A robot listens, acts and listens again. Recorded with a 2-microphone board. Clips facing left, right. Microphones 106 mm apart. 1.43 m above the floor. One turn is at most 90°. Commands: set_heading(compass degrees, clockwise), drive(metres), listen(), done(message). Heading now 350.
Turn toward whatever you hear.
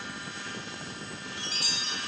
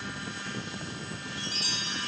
set_heading(280)
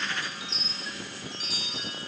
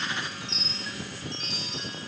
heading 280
done("Facing the chime, 2 to 4 m away.")